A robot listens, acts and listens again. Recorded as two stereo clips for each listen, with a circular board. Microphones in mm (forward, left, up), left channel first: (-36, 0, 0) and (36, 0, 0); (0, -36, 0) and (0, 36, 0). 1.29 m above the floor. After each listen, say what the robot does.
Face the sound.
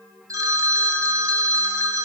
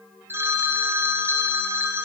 Turn 35° left.
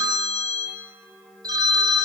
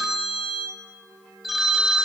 Facing the phone ringing.